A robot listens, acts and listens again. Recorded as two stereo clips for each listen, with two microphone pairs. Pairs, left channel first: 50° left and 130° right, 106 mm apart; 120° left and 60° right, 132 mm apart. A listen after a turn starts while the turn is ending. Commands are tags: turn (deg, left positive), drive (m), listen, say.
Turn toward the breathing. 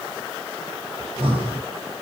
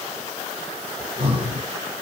<turn deg="-100"/>
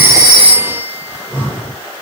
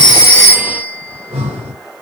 <turn deg="-25"/>
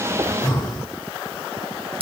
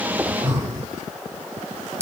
<say>Found it: breathing, straight ahead.</say>